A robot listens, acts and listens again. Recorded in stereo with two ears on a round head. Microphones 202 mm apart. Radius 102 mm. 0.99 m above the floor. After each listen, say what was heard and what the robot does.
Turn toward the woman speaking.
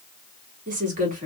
The woman speaking: about 35° right or 145° right. Turn 35° right.
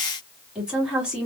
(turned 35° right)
Found it: a woman speaking, straight ahead, 1 to 2 m away.